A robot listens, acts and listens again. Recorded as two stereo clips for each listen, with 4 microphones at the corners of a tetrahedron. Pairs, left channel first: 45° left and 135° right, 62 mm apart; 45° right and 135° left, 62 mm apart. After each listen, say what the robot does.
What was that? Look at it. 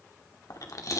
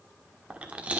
Turn 70° left.
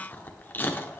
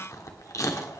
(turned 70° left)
Turn 15° right.
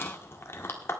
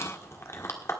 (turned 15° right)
Found it: chewing, straight ahead.